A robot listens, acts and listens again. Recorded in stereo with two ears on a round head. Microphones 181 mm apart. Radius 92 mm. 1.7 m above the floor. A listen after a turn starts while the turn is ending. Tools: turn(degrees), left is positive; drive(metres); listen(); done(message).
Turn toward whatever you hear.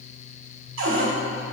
turn(degrees=-70)
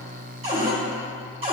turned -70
turn(degrees=-25)
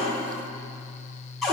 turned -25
done("Facing the cupboard door, 1 to 2 m away.")